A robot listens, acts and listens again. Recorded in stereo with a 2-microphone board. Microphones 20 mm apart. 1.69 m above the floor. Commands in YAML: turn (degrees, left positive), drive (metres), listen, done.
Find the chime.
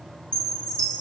turn: 65
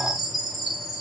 done: "Facing the chime, 2 to 4 m away."